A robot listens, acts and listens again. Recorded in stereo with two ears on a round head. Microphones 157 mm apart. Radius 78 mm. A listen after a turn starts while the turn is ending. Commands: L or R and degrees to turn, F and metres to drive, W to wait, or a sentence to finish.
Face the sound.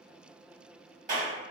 R45
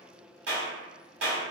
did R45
R90
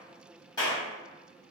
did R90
L25
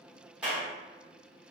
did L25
Found it: a clap, straight ahead, 1 to 2 m away.